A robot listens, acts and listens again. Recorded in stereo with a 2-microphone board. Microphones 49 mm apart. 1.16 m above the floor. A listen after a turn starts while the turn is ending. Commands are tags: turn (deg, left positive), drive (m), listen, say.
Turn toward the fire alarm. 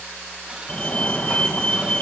<turn deg="25"/>
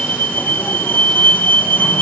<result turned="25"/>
<turn deg="125"/>
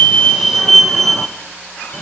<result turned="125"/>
<say>Facing the fire alarm, 1 to 2 m away.</say>